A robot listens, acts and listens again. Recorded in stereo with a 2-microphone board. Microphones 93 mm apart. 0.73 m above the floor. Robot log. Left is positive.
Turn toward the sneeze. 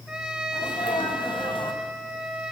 note: The sneeze: about 65° left or 115° left.
cmd yaw +65
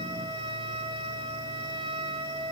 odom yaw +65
cmd idle
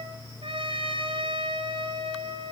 end: I heard a sneeze, but can't make it out now. It was about straight ahead or 50° left.